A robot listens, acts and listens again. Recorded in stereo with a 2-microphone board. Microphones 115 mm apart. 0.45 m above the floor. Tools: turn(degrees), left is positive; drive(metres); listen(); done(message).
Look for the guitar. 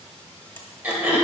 listen()
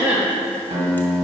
turn(degrees=-70)
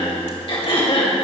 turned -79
listen()
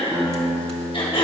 turn(degrees=-20)
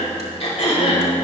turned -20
listen()
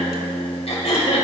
done("Found it: a guitar, straight ahead, 2 to 4 m away.")